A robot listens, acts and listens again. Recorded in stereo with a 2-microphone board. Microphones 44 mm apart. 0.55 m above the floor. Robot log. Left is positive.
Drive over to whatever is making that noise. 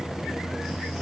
cmd idle
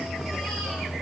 cmd idle
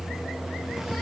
end: I can't make out anything.